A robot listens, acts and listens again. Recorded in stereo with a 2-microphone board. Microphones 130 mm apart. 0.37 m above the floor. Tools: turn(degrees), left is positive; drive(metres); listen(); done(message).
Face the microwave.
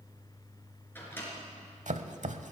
turn(degrees=15)
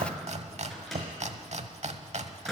done("Found it: a microwave, straight ahead.")